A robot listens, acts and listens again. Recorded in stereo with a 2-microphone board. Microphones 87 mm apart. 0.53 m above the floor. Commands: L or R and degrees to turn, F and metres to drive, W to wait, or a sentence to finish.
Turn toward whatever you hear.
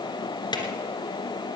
L60
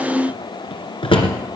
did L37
L85
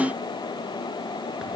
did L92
R10
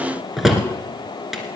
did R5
Facing the drawer, 2 to 4 m away.